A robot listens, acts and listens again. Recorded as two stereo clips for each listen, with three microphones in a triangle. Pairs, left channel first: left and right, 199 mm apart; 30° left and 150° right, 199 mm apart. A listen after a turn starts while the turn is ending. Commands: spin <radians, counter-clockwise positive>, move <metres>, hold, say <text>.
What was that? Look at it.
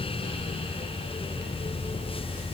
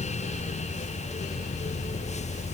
hold
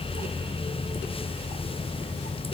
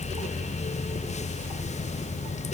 hold
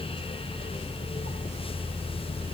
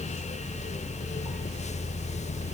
say I can't make out anything to turn to.